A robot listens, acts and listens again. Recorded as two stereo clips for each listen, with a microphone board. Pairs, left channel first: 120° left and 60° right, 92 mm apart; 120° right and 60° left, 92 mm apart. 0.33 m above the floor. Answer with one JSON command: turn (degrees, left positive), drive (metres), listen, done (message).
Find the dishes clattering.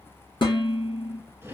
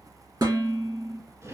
{"turn": 100}
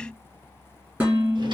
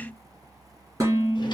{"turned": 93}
{"turn": 10}
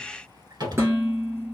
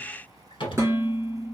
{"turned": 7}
{"done": "Found it: dishes clattering, straight ahead, 2 to 4 m away."}